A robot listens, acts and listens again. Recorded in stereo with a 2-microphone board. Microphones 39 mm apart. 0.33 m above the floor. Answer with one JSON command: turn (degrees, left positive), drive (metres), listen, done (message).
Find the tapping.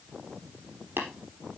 {"turn": -90}
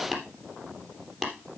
{"turn": -10}
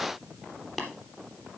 {"done": "Facing the tapping."}